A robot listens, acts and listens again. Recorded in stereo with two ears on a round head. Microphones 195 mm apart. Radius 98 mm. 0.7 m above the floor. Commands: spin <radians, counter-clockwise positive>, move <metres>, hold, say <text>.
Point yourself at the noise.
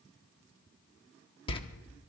spin 0.44
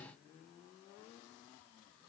hold
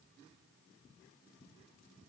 say I heard a door slam, but can't make it out now. It was about straight ahead or 130° left.